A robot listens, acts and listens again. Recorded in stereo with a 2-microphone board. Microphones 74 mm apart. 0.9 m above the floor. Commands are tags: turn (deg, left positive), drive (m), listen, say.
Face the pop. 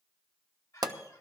<turn deg="-60"/>
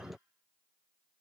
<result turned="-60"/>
<listen/>
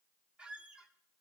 <say>I heard a pop, but can't make it out now. It was about straight ahead or 60° right.</say>